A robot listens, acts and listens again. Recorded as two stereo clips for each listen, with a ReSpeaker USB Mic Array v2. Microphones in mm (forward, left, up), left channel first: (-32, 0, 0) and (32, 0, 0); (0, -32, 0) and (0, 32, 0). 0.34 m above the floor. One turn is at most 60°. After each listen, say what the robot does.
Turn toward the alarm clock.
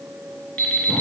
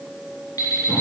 Turn 60° right.
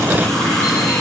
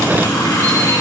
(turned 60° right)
Turn 50° right.
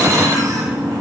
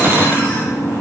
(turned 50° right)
Keep listening.
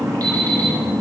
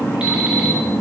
I heard an alarm clock from this way, but can't make it out now.